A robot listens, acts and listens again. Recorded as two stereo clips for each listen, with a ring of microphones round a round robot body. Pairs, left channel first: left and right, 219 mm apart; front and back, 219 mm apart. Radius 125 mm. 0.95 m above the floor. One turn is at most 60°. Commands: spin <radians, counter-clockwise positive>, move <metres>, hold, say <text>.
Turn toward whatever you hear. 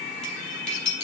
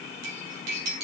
spin 1.05
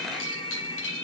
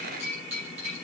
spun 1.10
spin 1.05
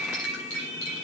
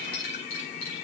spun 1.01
spin 0.96
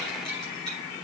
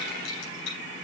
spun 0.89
say Facing the cutlery clinking.